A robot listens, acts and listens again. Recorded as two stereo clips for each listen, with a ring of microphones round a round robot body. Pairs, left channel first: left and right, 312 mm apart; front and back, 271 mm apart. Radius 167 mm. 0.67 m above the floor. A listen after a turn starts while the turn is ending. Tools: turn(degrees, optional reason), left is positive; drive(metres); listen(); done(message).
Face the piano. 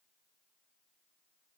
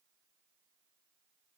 listen()
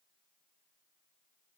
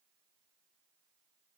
listen()
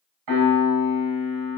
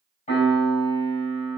turn(degrees=-70, reason="The piano: 70° right.")
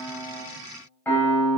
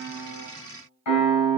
done("Facing the piano, over 4 m away.")